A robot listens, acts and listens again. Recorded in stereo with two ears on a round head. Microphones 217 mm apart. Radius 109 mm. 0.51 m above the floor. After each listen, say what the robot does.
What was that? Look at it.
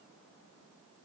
Keep listening.
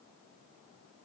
Keep listening.
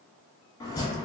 Turn 15° left.
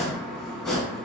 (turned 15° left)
Facing the chopping.